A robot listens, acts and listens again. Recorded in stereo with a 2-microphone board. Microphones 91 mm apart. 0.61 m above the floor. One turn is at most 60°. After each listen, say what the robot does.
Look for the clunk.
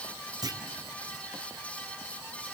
Turn 45° right.
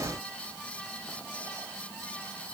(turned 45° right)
Keep listening.
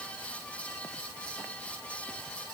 I heard a clunk, but can't make it out now. It was about straight ahead or 90° right.